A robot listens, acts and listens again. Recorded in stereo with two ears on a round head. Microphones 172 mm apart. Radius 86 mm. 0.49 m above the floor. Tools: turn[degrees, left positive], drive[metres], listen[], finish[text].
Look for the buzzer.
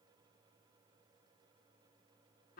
Action: listen[]
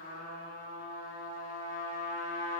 Action: listen[]
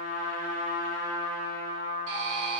Action: turn[-90]
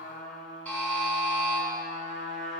Thought: So it is at 10° left.
Action: turn[10]
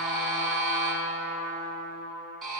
Action: finish[Found it: a buzzer, straight ahead.]